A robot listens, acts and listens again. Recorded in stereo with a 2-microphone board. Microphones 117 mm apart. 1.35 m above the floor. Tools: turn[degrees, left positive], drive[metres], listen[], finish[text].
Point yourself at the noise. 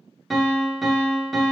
Action: turn[30]
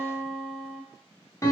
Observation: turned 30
Thought: So it is at 155° left.
Action: turn[155]
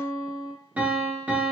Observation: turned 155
Thought: The piano is now 15° right.
Action: turn[-15]
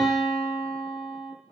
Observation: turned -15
Action: finish[Facing the piano, under 1 m away.]